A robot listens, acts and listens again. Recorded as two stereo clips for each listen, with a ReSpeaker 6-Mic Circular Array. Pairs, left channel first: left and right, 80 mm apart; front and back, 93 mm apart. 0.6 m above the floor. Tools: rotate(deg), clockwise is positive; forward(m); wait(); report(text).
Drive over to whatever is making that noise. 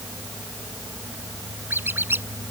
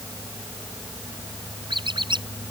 rotate(155)
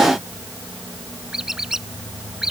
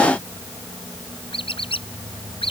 forward(1.0)
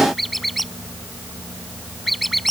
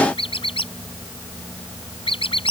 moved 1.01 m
forward(1.0)
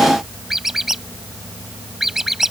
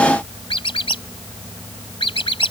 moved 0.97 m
forward(1.0)
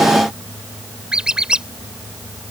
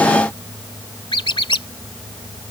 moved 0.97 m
rotate(10)
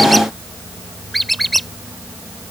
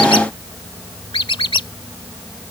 forward(1.0)
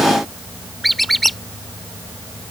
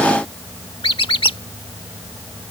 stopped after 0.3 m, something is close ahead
report("I am next to the squeak.")